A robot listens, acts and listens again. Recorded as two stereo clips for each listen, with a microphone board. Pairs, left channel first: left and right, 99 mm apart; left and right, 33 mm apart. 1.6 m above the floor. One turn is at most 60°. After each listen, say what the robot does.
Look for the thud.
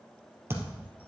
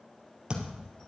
Turn 25° right.
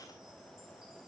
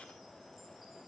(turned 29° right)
Keep listening.
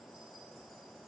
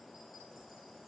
I heard a thud, but can't make it out now. It was about straight ahead or 125° right.